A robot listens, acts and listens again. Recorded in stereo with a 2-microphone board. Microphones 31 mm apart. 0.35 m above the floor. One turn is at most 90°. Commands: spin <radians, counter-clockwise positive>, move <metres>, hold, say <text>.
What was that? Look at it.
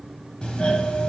spin 0.52
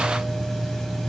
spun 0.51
spin 0.17
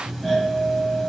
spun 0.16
say Facing the doorbell, 2 to 4 m away.